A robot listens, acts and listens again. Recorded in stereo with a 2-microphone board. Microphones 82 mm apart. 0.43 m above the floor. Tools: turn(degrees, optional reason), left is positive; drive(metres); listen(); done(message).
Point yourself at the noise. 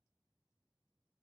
listen()
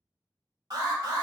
turn(degrees=-55, reason="The alarm: about 55° right or 125° right.")
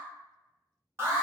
turn(degrees=-35, reason="So it is at 35° right.")
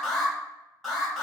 done("Found it: an alarm, straight ahead, 1 to 2 m away.")